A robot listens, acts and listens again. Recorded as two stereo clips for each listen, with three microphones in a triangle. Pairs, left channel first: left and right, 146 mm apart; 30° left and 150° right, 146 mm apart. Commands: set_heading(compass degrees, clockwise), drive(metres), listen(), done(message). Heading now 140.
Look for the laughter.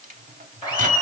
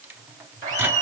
set_heading(350)
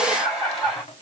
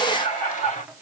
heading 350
done("Facing the laughter, 2 to 4 m away.")